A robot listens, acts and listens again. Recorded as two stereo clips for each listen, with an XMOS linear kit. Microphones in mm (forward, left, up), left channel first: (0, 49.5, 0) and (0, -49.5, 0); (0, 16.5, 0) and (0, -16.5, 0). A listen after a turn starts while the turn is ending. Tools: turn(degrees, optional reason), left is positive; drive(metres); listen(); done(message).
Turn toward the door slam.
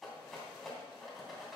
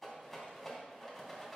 listen()
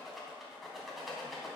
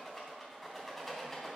listen()
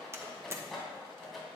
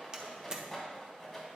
turn(degrees=-25, reason="The door slam: about 25° right or 155° right.")
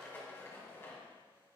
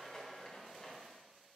listen()
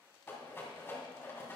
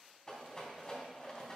done("I heard a door slam, but can't make it out now. It was about straight ahead or 130° right.")